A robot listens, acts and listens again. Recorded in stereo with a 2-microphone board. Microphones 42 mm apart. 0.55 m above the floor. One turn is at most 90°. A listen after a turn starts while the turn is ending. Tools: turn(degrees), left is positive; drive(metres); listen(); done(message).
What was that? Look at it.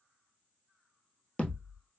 turn(degrees=20)
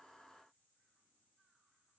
listen()
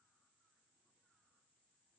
done("I heard a thud, but can't make it out now. It was about straight ahead or 140° left.")